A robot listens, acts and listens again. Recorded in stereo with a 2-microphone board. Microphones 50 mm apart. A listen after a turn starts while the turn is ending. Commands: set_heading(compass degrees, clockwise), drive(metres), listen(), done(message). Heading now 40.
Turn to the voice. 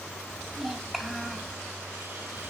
set_heading(10)
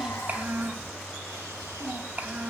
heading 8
set_heading(43)
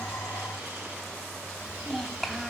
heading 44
done("Facing the child speaking.")